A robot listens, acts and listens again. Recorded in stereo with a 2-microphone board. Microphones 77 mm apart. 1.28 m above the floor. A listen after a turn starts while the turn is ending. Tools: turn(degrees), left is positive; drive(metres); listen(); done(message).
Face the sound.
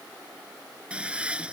turn(degrees=-30)
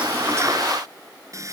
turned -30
turn(degrees=-140)
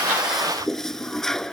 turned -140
done("Facing the toilet flushing.")